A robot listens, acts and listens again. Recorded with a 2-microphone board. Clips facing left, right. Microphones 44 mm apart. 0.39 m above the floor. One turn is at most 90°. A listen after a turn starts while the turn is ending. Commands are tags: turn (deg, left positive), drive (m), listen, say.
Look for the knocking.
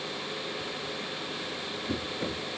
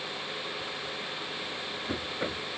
<turn deg="-35"/>
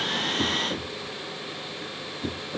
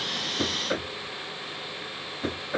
<turn deg="-90"/>
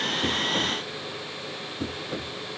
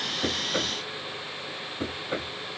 <turn deg="-45"/>
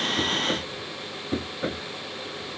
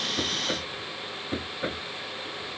<say>Facing the knocking.</say>